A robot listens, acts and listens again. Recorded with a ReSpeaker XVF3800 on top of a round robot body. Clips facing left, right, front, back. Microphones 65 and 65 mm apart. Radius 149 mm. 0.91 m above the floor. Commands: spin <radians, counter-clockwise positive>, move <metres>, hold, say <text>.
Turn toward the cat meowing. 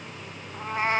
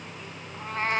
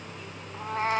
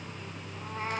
spin 0.17
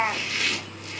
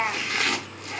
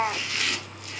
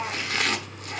say Facing the cat meowing, 1 to 2 m away.